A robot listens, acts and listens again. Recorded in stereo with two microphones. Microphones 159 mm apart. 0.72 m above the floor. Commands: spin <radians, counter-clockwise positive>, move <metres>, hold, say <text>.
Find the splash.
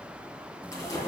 spin 0.35
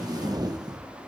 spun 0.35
hold
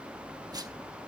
say I heard a splash, but can't make it out now. It was about straight ahead or 140° left.